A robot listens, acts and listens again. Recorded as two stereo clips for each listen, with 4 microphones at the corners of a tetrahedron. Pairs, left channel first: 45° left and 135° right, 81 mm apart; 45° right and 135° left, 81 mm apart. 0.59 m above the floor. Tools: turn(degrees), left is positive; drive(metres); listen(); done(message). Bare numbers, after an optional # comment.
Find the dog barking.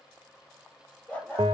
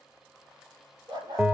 # The dog barking: 120° left.
turn(120)
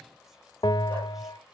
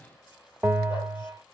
listen()
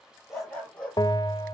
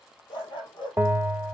# The dog barking is now 30° right.
turn(-30)
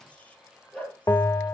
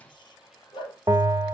# The dog barking is now 25° right.
turn(-25)
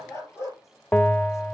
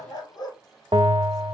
# The dog barking is now 10° right.
turn(-10)
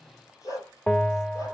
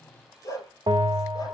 done("Facing the dog barking, 2 to 4 m away.")